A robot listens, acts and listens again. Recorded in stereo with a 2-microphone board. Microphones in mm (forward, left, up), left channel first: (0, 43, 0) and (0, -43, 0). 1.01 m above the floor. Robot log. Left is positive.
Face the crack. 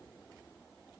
cmd idle
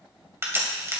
note: The crack: about 30° right or 150° right.
cmd yaw -30
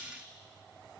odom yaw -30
cmd idle
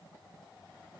end: I heard a crack, but can't make it out now. It was about straight ahead or 120° right.